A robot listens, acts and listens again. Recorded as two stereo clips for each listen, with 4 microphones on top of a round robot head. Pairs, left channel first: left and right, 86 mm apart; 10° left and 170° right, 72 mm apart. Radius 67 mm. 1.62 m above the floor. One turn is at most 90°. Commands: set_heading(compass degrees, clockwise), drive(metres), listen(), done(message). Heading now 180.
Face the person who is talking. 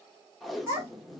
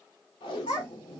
set_heading(215)
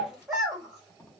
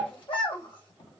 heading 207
done("Found it: a child speaking, straight ahead.")